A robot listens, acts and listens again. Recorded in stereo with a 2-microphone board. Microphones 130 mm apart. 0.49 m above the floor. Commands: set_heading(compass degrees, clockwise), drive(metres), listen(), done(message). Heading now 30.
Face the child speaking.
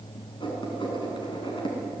listen()
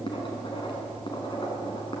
listen()
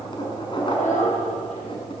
set_heading(300)
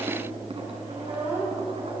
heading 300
set_heading(315)
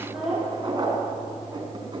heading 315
done("Found it: a child speaking, straight ahead, over 4 m away.")